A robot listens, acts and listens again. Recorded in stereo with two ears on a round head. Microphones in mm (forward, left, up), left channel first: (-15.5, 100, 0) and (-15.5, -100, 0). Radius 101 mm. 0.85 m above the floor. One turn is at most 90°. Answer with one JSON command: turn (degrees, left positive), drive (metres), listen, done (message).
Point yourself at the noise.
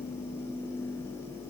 {"listen": true}
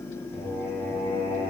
{"turn": 30}
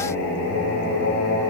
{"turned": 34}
{"turn": 90}
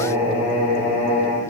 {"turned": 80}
{"turn": 30}
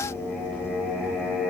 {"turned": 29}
{"done": "Facing the singing, 2 to 4 m away."}